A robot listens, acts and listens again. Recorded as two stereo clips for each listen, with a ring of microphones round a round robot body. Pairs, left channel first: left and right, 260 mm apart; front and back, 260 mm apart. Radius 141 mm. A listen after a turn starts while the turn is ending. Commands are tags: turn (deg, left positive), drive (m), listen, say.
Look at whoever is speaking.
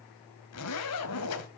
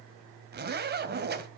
<listen/>
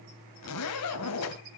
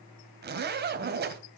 <listen/>
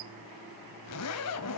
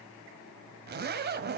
<say>I can't make out anyone speaking, only a zipper.</say>